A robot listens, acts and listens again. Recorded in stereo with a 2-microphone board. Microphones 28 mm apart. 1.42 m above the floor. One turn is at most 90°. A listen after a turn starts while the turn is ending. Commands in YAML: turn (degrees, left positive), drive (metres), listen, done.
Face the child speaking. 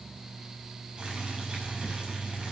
listen: true
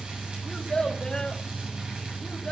turn: 25
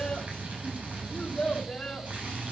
turn: 20
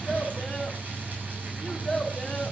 done: "Found it: a child speaking, straight ahead."